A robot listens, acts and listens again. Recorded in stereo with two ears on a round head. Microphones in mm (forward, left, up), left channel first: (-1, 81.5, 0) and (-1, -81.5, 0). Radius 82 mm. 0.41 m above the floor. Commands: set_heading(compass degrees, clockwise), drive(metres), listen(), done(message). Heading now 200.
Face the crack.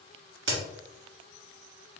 set_heading(290)
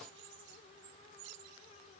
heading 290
done("Facing where the crack came from. I can't hear it now.")